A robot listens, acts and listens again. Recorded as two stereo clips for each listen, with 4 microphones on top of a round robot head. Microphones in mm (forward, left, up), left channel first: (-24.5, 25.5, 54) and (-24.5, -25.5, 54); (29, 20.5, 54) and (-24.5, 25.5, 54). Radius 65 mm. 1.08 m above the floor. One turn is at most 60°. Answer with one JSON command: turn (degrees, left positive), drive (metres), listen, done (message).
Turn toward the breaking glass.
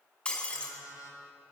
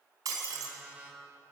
{"turn": 60}
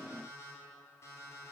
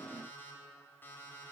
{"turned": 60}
{"turn": 60}
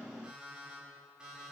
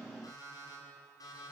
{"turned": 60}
{"turn": 40}
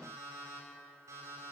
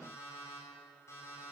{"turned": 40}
{"done": "Facing where the breaking glass came from. I can't hear it now."}